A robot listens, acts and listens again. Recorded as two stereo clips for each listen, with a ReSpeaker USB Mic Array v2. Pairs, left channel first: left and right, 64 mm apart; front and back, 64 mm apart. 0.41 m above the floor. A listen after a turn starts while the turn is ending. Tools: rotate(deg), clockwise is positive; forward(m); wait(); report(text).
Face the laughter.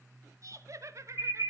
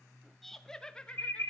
rotate(70)
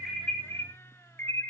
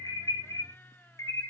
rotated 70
wait()
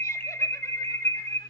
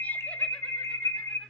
wait()
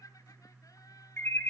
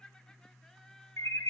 rotate(-80)
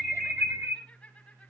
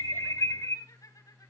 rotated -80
rotate(-20)
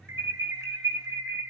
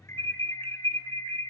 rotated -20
wait()
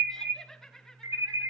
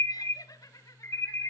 rotate(-10)
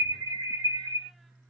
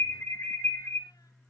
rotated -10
wait()
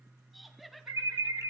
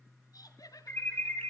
report("Facing the laughter.")